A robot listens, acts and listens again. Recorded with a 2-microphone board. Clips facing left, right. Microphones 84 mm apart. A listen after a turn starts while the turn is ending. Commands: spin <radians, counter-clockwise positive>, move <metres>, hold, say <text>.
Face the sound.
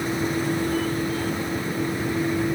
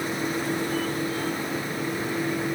hold
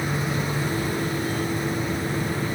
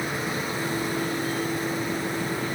hold
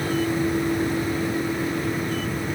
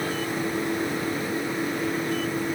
say I can't make out anything.